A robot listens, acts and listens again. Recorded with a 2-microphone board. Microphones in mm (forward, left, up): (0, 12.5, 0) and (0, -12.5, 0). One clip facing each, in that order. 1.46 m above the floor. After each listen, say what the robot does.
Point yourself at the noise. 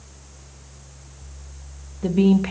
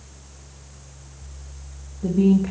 Turn 60° left.
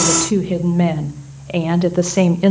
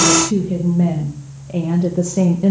Turn 80° left.
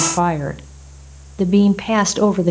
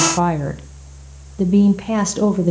Turn 35° left.
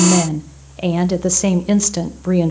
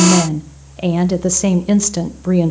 Found it: a woman speaking, straight ahead.